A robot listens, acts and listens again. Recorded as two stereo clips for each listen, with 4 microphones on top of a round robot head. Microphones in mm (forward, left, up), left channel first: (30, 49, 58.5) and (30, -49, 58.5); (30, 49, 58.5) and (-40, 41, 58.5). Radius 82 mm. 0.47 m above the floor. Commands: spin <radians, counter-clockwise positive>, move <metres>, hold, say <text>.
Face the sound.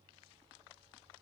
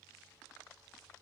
hold
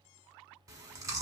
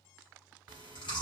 spin -0.52
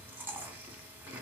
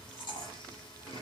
spin -0.35
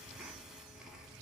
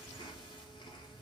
say Facing the chewing.